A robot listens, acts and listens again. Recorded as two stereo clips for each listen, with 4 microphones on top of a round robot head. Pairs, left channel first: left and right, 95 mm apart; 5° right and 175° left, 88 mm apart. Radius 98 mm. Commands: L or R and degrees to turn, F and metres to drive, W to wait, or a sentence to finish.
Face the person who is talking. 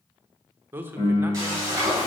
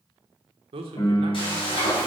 R160
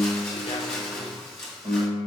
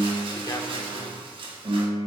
W
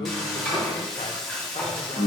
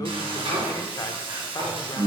W
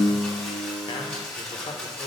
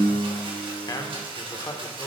L40
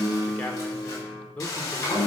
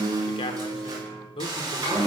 L10
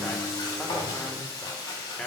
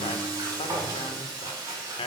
Found it: a man speaking, straight ahead, under 1 m away.